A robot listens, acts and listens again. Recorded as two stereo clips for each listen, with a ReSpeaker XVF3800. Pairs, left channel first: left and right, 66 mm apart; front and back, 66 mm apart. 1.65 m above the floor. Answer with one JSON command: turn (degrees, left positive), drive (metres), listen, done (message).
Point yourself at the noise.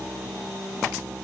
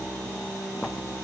{"listen": true}
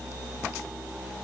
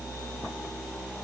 {"listen": true}
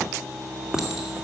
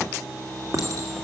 {"turn": -170}
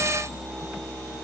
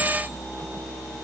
{"listen": true}
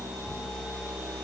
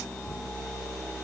{"listen": true}
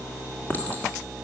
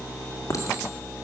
{"turn": 30}
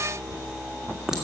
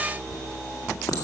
{"turn": -10}
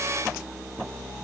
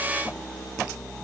{"listen": true}
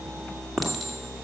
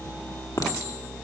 {"done": "Facing the clink, 2 to 4 m away."}